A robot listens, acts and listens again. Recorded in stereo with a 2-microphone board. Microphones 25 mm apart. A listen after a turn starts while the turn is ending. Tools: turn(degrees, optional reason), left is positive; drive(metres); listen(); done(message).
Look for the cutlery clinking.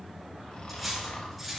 turn(degrees=30)
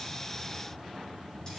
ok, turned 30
listen()
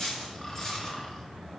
turn(degrees=150, reason="So it is at 150° left.")
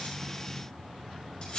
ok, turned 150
turn(degrees=45, reason="The cutlery clinking is now 45° left.")
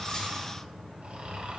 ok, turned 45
listen()
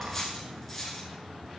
done("Found it: cutlery clinking, straight ahead, over 4 m away.")